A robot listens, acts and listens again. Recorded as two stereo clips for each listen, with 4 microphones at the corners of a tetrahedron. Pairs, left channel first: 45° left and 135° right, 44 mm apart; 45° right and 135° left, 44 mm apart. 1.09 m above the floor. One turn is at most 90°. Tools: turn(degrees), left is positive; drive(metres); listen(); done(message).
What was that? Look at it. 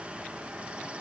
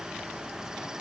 listen()
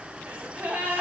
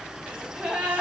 turn(degrees=-90)
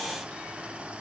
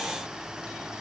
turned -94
turn(degrees=-75)
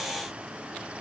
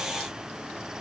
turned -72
done("I heard a gasp from this way, but can't make it out now.")